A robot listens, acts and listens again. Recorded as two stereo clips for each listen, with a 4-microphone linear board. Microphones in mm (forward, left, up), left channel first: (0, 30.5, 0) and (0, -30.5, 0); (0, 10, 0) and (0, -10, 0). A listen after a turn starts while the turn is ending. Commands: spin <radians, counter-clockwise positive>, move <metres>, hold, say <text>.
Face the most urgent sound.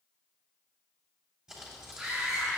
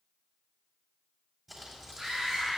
spin -0.52
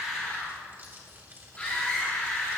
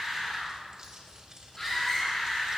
spin 0.35
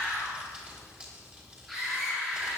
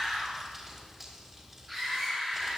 say Found it: a scream, straight ahead, 2 to 4 m away.